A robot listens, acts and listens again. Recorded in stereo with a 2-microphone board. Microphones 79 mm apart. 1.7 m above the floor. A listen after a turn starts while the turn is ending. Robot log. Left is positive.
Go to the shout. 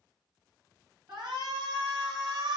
cmd yaw -90
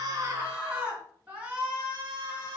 note: So it is at 15° right.
cmd yaw -15
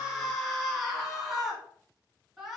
cmd fwd 1.0
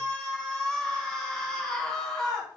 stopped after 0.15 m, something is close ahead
note: The shout is now 10° left.
cmd yaw +10
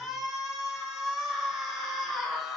end: Something is in my way. I am facing the shout but have not reached it.